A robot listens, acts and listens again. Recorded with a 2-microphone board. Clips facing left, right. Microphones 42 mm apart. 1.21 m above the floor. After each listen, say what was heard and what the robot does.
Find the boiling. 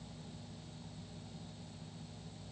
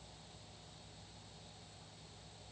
Keep listening.
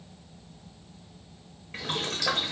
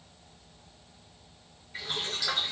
The boiling: about 65° left or 115° left. Turn 65° left.
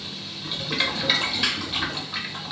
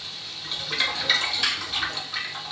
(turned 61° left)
So it is at 10° left. Turn 10° left.
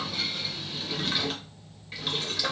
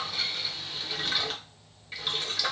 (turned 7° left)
Facing the boiling, under 1 m away.